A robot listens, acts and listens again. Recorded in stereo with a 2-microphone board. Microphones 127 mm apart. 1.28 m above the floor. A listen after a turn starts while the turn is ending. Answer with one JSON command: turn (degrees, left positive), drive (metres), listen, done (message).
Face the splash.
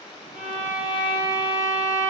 {"listen": true}
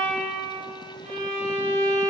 {"listen": true}
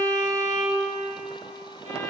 {"done": "I can't make out a splash, only a violin."}